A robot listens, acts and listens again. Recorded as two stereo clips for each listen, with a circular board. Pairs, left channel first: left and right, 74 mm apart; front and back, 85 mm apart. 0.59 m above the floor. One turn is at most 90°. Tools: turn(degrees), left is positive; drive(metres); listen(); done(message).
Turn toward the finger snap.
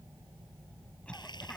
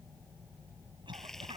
listen()
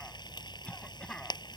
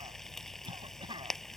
listen()
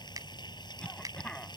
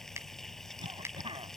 turn(degrees=-90)
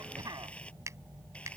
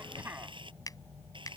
turn(degrees=-45)
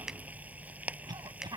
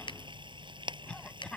turn(degrees=-10)
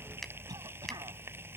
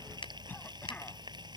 done("Found it: a finger snap, straight ahead.")